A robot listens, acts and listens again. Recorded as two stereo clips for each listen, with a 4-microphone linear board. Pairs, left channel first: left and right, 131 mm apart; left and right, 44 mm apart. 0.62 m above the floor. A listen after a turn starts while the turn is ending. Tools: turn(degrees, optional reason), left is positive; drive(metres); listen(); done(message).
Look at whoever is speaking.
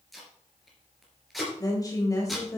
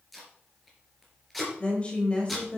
turn(degrees=25, reason="The woman speaking: about 25° left or 155° left.")
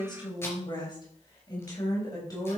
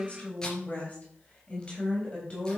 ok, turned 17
turn(degrees=25, reason="The woman speaking: about 25° left or 155° left.")
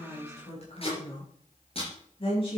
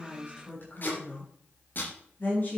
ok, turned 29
turn(degrees=135, reason="So it is at 135° left.")
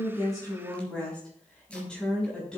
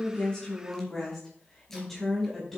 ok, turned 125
done("Found it: a woman speaking, straight ahead, over 4 m away.")